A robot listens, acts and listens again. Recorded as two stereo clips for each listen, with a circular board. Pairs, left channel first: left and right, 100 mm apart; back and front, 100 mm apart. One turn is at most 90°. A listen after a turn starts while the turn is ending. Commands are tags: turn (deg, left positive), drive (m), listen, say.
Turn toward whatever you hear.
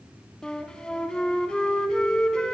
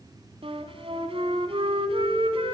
<turn deg="10"/>
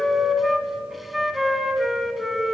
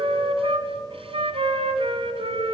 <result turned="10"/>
<say>Found it: a flute, straight ahead.</say>